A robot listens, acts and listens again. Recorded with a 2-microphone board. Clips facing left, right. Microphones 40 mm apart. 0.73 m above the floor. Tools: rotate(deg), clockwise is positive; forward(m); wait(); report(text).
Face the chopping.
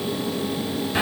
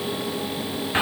wait()
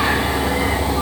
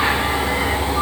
wait()
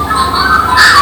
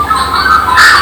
report("I can't make out chopping, only a bird.")